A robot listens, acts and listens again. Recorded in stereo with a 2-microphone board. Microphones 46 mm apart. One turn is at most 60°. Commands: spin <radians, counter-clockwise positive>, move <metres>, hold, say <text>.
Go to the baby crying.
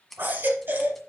spin -0.87
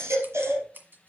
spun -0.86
spin -1.05
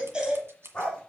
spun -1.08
spin -0.35
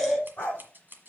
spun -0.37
move 1.0
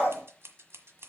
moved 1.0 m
hold
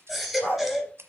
move 1.0
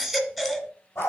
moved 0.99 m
move 1.0
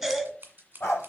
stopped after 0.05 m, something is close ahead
say I am next to the baby crying.